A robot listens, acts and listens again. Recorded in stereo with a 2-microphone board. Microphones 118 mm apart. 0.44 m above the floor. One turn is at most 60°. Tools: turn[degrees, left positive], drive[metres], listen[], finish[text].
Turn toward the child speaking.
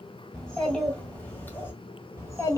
Thought: The child speaking: about 30° left or 150° left.
Action: turn[30]
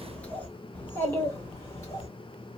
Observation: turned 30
Thought: The child speaking: about 30° left or 150° left.
Action: turn[30]
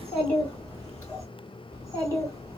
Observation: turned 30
Thought: The child speaking: about 25° left or 155° left.
Action: turn[25]
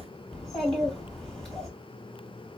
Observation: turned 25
Action: finish[Found it: a child speaking, straight ahead, 2 to 4 m away.]